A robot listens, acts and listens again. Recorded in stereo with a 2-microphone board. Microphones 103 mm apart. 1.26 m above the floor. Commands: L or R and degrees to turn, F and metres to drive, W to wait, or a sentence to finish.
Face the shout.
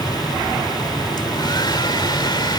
W
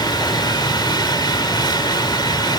W
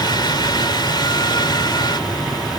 I can't make out a shout, only a hair dryer.